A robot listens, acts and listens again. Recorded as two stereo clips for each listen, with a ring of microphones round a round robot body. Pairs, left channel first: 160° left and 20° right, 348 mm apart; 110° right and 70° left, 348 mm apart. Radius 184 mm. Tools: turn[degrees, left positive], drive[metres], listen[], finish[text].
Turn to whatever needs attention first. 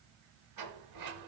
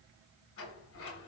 Action: listen[]
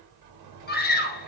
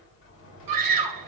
Thought: The scream: 95° left.
Action: turn[95]
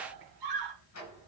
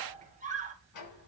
Action: finish[Facing the scream.]